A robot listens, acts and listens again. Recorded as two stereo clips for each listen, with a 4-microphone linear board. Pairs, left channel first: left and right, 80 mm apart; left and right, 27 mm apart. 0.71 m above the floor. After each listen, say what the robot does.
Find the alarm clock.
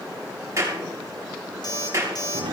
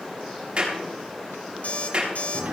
Turn 60° left.
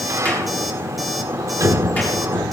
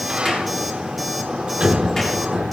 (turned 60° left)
Keep listening.
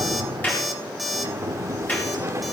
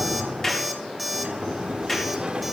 Found it: an alarm clock, straight ahead, 2 to 4 m away.